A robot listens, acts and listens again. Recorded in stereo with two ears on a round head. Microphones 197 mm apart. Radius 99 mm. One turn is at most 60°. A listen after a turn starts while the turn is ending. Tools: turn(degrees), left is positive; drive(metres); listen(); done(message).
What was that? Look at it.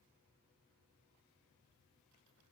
listen()
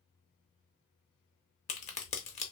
turn(degrees=30)
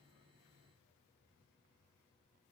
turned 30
listen()
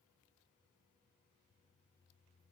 done("I heard a crack, but can't make it out now. It was about straight ahead or 120° left.")